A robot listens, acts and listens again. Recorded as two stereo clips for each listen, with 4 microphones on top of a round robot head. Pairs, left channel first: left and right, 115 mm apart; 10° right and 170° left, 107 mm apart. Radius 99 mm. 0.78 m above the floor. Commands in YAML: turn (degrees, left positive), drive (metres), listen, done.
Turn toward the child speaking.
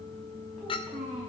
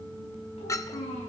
done: "Facing the child speaking, over 4 m away."